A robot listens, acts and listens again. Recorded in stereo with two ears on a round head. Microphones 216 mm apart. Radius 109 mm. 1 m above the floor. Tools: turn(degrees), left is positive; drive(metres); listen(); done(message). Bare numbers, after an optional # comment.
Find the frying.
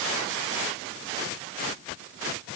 listen()
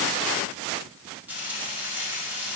turn(-30)
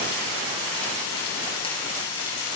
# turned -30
# So it is at 25° left.
turn(25)
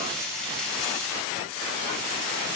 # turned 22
done("Found it: frying, straight ahead.")